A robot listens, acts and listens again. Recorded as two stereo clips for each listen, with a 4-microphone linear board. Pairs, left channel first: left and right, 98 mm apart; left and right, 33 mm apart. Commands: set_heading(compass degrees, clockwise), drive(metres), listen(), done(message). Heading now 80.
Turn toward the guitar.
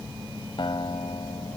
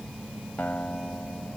set_heading(20)
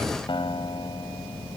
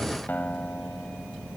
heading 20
set_heading(320)
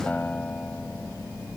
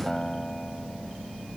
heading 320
set_heading(305)
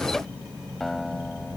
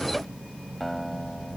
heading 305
done("Facing the guitar.")